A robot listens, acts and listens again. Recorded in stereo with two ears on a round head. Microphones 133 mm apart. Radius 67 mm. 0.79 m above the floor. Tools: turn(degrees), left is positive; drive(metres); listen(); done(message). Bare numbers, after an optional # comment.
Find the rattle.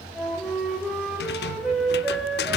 # The rattle: about 75° left or 105° left.
turn(75)
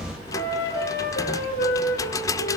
# So it is at 20° left.
turn(20)
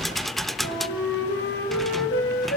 done("Found it: a rattle, straight ahead.")